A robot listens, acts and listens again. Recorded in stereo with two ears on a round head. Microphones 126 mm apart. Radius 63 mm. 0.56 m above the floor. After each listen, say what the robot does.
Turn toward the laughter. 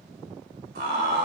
Turn 65° right.
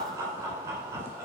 Turn 20° right.
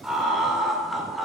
Facing the laughter, 1 to 2 m away.